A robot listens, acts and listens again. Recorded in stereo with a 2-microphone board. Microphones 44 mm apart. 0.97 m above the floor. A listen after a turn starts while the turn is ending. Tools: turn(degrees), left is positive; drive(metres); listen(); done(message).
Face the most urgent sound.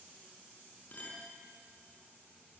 listen()
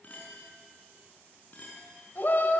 turn(degrees=45)
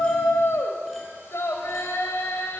turn(degrees=90)
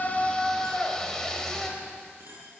turn(degrees=15)
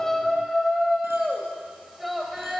done("Found it: a shout, straight ahead.")